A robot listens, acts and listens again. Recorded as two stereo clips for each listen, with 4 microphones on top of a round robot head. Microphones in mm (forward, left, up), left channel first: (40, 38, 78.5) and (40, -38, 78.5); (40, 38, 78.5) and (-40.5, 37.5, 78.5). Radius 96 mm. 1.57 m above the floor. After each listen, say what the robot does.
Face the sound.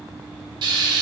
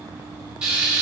Turn 100° right.
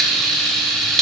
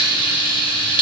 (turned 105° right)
Facing the frying.